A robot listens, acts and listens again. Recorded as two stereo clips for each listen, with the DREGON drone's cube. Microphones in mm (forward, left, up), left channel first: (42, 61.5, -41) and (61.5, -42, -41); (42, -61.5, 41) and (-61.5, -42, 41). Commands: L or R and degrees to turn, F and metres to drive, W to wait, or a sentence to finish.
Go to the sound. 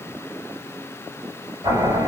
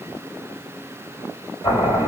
R45
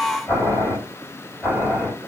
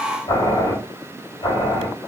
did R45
L10
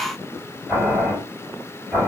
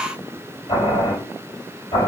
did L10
F1.0
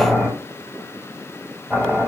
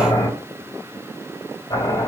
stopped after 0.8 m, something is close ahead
Arrived at the boiling, straight ahead.